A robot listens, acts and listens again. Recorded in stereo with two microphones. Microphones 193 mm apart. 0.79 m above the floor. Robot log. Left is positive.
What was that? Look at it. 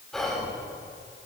cmd yaw +30
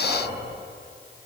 note: So it is at 25° right.
cmd yaw -25
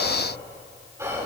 note: The whispering is now 15° right.
cmd yaw -15
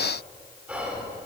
end: Facing the whispering, 2 to 4 m away.